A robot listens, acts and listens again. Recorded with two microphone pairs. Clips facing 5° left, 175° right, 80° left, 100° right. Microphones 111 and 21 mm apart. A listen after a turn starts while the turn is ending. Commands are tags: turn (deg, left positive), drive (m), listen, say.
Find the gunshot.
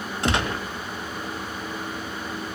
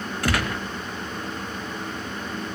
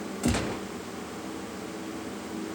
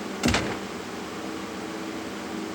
<turn deg="-60"/>
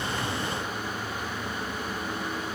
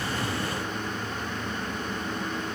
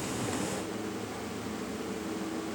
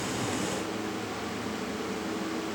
<say>Facing where the gunshot came from. I can't hear it now.</say>